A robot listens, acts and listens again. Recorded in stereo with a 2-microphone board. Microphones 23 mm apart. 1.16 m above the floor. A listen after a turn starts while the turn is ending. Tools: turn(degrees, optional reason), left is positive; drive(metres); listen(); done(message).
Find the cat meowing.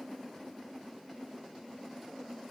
listen()
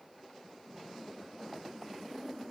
listen()
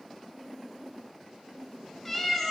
turn(degrees=30)
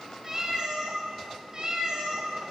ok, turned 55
turn(degrees=-40, reason="So it is at 40° right.")
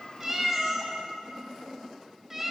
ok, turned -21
turn(degrees=-20, reason="The cat meowing is now 20° right.")
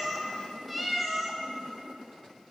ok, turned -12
done("Found it: a cat meowing, straight ahead.")